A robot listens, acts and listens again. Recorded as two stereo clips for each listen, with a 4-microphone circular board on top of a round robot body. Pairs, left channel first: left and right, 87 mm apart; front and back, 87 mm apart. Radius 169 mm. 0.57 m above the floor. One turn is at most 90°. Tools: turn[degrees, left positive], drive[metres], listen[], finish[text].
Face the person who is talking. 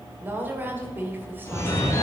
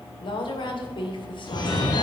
Thought: The woman speaking: 20° right.
Action: turn[-20]
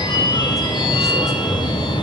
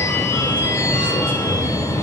Action: listen[]
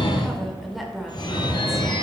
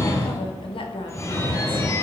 Action: finish[Facing the woman speaking.]